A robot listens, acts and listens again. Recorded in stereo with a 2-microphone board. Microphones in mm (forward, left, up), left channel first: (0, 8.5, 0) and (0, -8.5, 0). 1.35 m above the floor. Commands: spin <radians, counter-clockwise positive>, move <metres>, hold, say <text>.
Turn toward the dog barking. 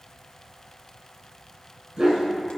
spin -1.22
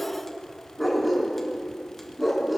spin -0.26
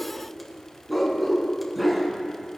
spin -0.17
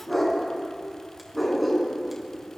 say Found it: a dog barking, straight ahead, 2 to 4 m away.